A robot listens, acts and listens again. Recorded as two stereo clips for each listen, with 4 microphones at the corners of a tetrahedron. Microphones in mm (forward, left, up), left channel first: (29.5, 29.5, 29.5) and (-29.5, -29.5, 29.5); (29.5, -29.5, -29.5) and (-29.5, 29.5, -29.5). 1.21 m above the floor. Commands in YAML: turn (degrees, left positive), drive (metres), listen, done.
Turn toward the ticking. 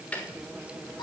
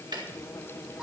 turn: 115
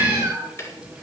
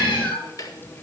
done: "Found it: ticking, straight ahead."